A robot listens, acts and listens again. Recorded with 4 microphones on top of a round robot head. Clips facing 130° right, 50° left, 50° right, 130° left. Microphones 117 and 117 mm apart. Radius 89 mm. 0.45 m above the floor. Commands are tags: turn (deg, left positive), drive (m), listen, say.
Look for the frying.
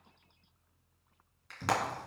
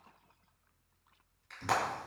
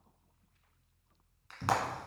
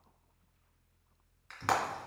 <turn deg="-130"/>
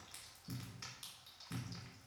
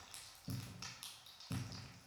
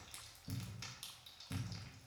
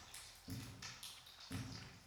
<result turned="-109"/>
<turn deg="-20"/>
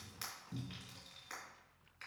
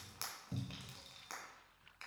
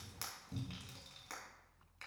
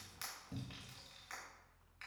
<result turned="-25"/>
<say>Facing the frying.</say>